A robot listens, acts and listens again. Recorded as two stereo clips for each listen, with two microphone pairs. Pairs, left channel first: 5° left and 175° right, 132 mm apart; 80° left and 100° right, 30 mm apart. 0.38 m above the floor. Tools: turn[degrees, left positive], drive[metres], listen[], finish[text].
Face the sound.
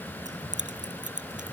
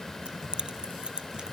Thought: The keys jangling: 160° right.
Action: turn[-160]
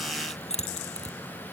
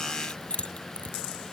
Thought: The keys jangling is now 40° left.
Action: turn[40]
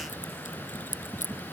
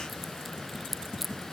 Thought: The keys jangling is now 15° right.
Action: turn[-15]
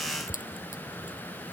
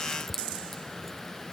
Action: listen[]
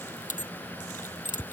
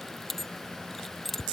Action: finish[Facing the keys jangling.]